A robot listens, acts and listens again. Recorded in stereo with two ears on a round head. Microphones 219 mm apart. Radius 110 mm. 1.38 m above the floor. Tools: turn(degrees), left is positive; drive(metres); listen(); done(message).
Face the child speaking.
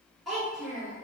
turn(degrees=30)
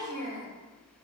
turn(degrees=-35)
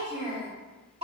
turn(degrees=-25)
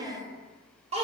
turn(degrees=-30)
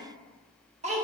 turn(degrees=-30)
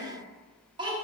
turn(degrees=-20)
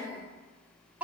done("Found it: a child speaking, straight ahead, 1 to 2 m away.")